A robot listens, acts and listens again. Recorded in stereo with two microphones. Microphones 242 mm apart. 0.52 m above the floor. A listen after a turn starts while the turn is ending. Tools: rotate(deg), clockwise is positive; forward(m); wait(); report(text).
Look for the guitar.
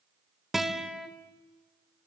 rotate(-30)
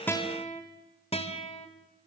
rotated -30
rotate(-150)
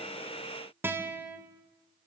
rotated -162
rotate(10)
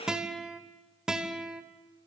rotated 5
report("Found it: a guitar, straight ahead.")